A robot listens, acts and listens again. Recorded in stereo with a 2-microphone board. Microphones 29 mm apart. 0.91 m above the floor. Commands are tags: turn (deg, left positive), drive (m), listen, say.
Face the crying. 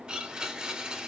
<listen/>
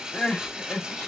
<turn deg="90"/>
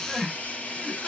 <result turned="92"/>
<say>Found it: crying, straight ahead.</say>